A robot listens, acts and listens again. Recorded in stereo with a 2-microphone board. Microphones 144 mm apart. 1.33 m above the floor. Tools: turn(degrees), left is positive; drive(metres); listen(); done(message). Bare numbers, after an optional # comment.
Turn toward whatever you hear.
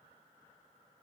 listen()
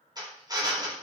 # The drill: about 30° right or 150° right.
turn(-30)
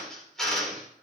done("Found it: a drill, straight ahead, 2 to 4 m away.")